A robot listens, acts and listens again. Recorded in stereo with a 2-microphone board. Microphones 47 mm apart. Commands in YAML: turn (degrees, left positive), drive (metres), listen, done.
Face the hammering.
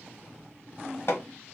turn: 65
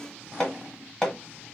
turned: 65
turn: 10
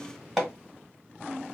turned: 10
done: "Facing the hammering."